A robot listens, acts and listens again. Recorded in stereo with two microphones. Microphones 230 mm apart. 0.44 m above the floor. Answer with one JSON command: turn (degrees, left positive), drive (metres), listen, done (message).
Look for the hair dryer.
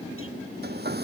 {"turn": -45}
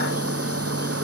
{"turn": -90}
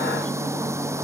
{"turn": -10}
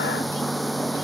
{"done": "Facing the hair dryer."}